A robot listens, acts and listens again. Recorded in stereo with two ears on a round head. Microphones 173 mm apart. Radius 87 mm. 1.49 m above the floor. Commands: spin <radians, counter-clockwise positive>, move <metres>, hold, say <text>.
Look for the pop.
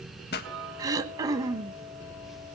spin 0.96
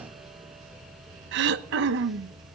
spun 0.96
hold
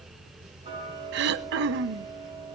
say I heard a pop, but can't make it out now. It was about straight ahead or 70° left.